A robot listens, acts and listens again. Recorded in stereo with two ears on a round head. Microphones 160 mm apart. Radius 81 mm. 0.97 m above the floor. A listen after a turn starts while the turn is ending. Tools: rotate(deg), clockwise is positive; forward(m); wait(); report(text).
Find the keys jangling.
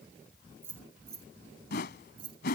rotate(30)
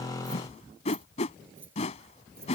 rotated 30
rotate(15)
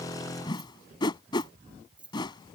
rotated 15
report("Facing the keys jangling.")